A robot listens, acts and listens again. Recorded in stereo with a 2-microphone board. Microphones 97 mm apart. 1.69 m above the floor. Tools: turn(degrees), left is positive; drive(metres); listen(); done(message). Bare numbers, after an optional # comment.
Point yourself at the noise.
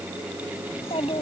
turn(90)
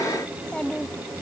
# So it is at 10° left.
turn(10)
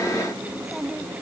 done("Facing the child speaking.")